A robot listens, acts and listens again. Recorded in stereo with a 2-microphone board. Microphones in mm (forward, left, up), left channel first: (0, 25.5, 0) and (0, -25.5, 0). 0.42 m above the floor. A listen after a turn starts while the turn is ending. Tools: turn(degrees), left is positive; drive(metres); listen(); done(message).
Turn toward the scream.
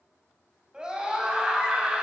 turn(degrees=-20)
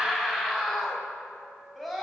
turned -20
done("Facing the scream, 2 to 4 m away.")